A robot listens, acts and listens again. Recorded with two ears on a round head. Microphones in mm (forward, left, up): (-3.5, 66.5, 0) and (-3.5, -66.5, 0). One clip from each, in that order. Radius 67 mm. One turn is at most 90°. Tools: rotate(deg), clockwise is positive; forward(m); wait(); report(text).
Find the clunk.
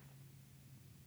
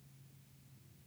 wait()
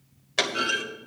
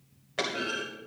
rotate(-70)
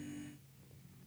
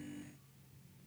wait()
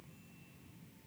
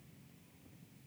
report("I heard a clunk, but can't make it out now. It was about straight ahead or 40° left.")